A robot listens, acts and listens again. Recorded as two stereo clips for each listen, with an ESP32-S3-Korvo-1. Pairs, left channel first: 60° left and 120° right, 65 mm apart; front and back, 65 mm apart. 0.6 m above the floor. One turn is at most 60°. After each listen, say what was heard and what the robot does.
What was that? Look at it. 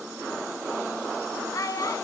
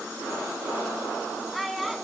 The child speaking: 90° left. Turn 60° left.
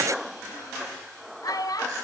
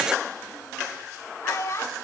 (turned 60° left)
The child speaking is now 45° left. Turn 45° left.
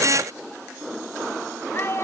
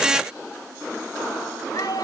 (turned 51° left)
The child speaking is now 10° left. Turn 10° left.
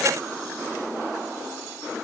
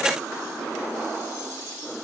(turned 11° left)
Keep listening.
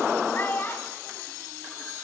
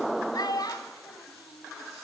Facing the child speaking.